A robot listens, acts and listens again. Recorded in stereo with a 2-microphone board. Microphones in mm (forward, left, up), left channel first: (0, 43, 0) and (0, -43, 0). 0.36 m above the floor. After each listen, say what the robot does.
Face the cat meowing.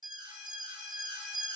Keep listening.
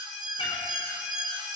Turn 75° left.
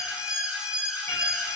Keep listening.
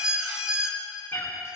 Turn 30° left.
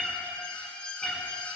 Found it: a cat meowing, straight ahead, 2 to 4 m away.